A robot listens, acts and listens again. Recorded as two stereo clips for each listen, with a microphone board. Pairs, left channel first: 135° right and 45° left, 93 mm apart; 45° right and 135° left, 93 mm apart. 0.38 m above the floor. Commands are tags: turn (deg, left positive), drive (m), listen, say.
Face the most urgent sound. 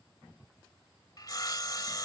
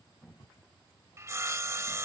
<listen/>
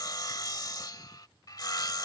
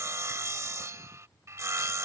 <listen/>
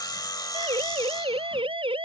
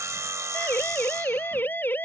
<turn deg="25"/>
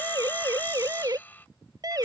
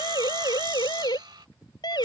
<say>Facing the siren.</say>